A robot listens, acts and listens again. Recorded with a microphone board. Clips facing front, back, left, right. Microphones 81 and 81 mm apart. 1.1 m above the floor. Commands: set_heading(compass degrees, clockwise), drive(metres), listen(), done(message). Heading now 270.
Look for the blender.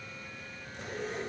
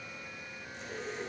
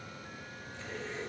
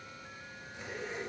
listen()
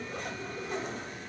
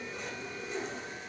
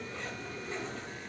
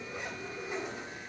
listen()
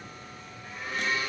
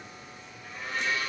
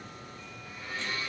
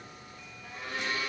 set_heading(355)
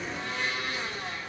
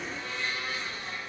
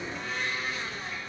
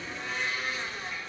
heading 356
done("Facing the blender, 1 to 2 m away.")